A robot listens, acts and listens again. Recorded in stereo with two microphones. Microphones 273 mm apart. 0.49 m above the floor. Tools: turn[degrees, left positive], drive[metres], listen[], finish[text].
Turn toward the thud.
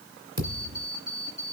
Action: turn[-90]
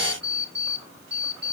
Action: finish[Facing where the thud came from. I can't hear it now.]